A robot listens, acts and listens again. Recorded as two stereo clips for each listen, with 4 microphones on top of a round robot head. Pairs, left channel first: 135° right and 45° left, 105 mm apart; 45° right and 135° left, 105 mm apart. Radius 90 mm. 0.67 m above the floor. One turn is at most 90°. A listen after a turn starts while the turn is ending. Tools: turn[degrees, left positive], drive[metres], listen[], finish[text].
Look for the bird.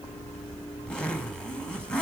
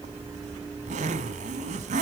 Action: listen[]
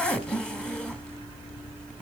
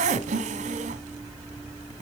Action: listen[]
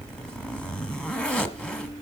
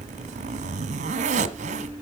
Action: finish[I can't make out a bird to turn to.]